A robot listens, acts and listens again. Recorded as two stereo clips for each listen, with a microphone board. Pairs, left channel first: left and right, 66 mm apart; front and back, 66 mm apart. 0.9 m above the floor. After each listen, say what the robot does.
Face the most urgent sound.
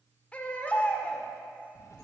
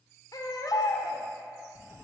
Turn 20° left.
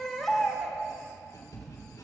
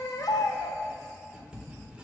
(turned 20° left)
Facing the baby crying, 1 to 2 m away.